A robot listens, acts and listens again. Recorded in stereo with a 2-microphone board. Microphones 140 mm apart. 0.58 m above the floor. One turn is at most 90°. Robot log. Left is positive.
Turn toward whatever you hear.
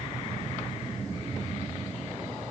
cmd idle
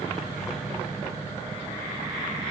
cmd idle
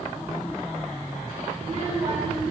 note: The child speaking: about 40° right or 140° right.
cmd yaw -40
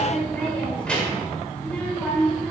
note: So it is at 10° left.
cmd yaw +10
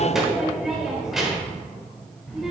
end: Facing the child speaking.